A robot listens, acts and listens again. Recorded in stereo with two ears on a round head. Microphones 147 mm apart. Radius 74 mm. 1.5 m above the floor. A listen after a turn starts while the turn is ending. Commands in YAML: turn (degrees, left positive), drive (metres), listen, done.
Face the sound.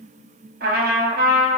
turn: -60
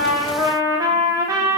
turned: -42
turn: -20
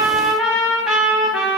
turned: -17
done: "Found it: a trumpet, straight ahead, 1 to 2 m away."